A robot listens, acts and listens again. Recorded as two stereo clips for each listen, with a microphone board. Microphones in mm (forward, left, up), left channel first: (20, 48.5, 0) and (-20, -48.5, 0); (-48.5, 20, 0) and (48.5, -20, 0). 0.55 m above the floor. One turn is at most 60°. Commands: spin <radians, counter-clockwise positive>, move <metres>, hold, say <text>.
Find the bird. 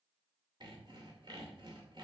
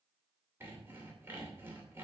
hold
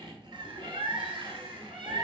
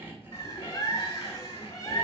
spin -1.05
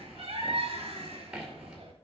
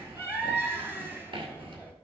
spin -1.05
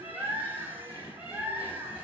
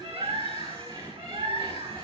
spin -0.70
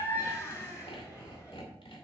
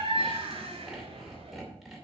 say Facing the bird, 2 to 4 m away.